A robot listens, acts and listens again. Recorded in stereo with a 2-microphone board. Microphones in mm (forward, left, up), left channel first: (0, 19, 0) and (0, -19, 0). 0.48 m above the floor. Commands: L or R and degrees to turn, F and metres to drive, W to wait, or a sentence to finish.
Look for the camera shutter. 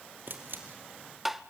R60
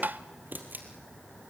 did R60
R55
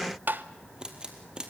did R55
R25
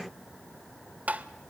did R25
W
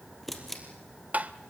Found it: a camera shutter, straight ahead, 2 to 4 m away.